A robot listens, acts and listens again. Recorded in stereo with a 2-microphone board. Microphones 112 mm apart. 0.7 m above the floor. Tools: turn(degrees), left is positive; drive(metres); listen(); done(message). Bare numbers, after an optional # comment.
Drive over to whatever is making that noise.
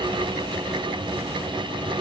listen()
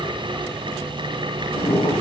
# The boiling: about 60° left or 120° left.
turn(60)
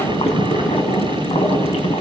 # So it is at 60° left.
turn(60)
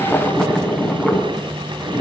drive(1.0)
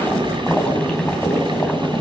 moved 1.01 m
# The boiling is now 10° left.
turn(10)
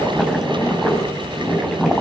drive(1.0)
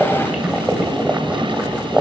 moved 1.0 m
# The boiling is now 10° right.
turn(-10)
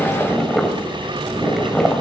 drive(1.0)
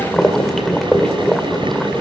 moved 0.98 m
drive(1.0)
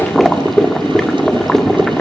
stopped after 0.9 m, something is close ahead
done("I am next to the boiling.")